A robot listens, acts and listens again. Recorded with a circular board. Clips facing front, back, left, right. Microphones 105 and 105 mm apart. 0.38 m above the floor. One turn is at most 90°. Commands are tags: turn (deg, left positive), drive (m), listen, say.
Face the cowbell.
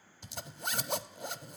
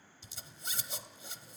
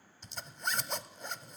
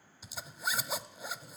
<listen/>
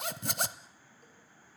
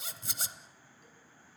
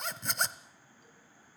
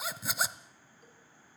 <listen/>
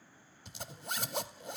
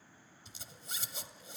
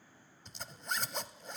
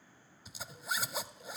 <say>I can't make out a cowbell to turn to.</say>